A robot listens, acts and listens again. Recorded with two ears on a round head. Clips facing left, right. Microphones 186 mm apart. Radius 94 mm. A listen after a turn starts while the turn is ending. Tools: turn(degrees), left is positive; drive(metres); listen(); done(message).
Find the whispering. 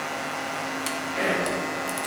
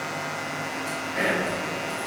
turn(degrees=-25)
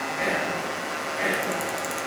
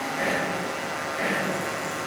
done("Facing the whispering, 1 to 2 m away.")